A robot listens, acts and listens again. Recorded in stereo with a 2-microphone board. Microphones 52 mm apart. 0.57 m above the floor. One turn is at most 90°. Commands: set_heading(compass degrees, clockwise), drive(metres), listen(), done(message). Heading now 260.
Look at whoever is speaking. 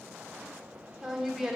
set_heading(290)
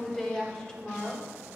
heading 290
set_heading(275)
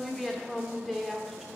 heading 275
done("Found it: a woman speaking, straight ahead.")